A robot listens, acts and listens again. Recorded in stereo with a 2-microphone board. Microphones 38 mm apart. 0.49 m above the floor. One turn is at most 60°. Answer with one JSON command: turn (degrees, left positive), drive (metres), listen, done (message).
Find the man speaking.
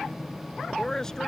{"turn": 30}
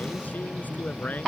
{"turn": 60}
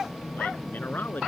{"turn": 55}
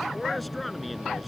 {"done": "Facing the man speaking."}